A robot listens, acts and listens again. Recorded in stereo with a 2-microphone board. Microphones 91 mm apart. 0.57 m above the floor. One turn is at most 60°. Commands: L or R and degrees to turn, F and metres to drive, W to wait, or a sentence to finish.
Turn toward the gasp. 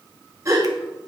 R35
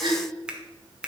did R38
R60
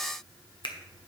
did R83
R15
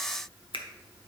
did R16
Facing where the gasp came from. I can't hear it now.